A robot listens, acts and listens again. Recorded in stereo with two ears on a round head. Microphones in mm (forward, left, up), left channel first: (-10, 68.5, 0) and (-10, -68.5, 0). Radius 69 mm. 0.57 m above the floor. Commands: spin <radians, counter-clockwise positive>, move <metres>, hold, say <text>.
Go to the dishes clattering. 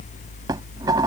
spin -0.44
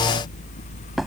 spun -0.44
move 1.0
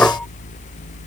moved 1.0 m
spin 0.17
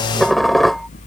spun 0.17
move 1.0
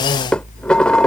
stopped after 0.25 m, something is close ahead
say I am next to the dishes clattering.